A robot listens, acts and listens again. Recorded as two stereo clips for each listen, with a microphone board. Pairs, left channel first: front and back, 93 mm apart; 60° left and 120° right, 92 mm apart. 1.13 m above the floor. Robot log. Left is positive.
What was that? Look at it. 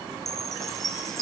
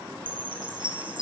note: The chime: 90° right.
cmd yaw -90
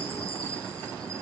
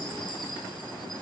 cmd idle
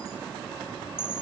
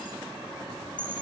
note: The chime is now 20° left.
cmd yaw +20
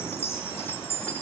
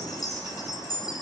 note: The chime is now 10° left.
cmd yaw +10
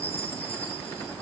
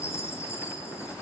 end: Facing the chime, 2 to 4 m away.